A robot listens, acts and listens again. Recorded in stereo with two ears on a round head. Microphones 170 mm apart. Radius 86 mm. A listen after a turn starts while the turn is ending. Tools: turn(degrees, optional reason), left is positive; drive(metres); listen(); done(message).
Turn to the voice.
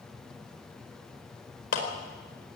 listen()
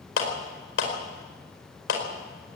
listen()
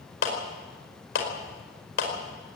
done("I can't make out anyone speaking, only a clap.")